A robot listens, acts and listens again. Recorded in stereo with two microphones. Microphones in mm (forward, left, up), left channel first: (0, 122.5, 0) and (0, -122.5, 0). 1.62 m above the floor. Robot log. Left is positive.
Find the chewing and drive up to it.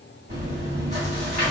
note: The chewing: about 40° right or 140° right.
cmd yaw -40
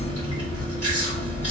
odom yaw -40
note: So it is at 95° right.
cmd yaw -95
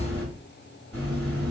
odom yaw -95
note: The chewing is now 10° left.
cmd yaw +10
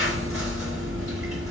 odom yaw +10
cmd fwd 1.0
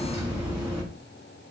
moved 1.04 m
cmd fwd 1.0
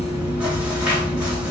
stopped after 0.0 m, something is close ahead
end: I am next to the chewing.